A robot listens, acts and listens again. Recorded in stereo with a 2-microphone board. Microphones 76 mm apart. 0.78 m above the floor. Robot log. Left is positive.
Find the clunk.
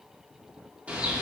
cmd idle
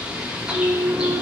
note: The clunk: about 65° right or 115° right.
cmd yaw -65
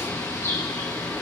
cmd idle
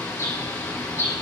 end: I heard a clunk, but can't make it out now. It was about straight ahead or 50° right.